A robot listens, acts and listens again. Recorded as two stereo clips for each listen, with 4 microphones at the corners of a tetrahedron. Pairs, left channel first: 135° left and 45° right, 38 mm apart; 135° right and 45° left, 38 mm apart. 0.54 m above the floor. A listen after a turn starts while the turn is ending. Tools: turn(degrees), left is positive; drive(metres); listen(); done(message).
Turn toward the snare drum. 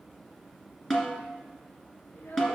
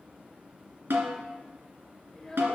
turn(degrees=55)
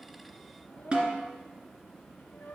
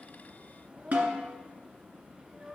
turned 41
turn(degrees=15)
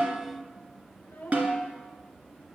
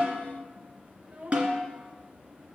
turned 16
done("Found it: a snare drum, straight ahead, 2 to 4 m away.")